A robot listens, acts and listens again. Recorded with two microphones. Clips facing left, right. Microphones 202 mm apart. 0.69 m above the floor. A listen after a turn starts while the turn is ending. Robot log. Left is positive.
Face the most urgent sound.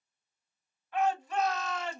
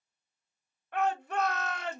note: The shout: about 60° right or 120° right.
cmd yaw -60
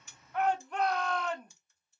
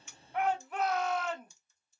end: Found it: a shout, straight ahead.